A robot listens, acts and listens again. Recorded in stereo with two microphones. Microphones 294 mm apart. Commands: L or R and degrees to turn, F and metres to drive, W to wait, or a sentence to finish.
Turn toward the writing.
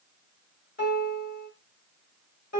W
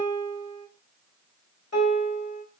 W
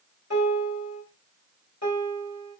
I can't make out writing to turn to.